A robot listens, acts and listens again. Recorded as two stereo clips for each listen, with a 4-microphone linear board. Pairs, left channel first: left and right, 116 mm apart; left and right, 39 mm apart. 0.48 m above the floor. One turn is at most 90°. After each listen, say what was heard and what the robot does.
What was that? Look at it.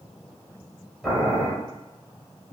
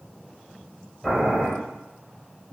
Turn 30° left.
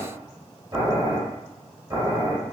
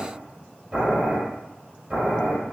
So it is at 30° right. Turn 30° right.
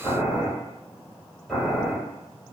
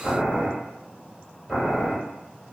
Facing the boiling.